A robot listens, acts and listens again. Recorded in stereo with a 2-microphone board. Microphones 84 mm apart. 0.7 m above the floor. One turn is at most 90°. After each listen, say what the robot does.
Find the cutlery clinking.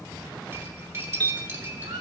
Turn 35° right.
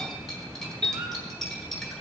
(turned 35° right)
Facing the cutlery clinking, 2 to 4 m away.